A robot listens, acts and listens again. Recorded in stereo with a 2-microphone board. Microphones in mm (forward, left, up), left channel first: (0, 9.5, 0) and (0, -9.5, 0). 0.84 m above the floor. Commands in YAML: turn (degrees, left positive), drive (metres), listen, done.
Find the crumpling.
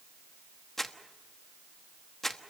turn: 30
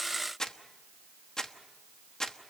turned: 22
turn: 145
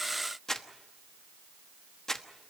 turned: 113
turn: 35
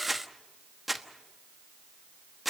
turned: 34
done: "Facing the crumpling, 1 to 2 m away."